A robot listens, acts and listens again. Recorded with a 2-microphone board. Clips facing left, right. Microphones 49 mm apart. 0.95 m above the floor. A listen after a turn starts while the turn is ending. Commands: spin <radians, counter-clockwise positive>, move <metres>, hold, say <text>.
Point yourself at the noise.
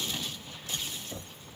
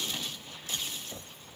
spin 0.52
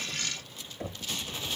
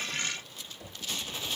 spin 2.44
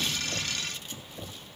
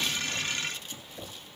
say Facing the knocking.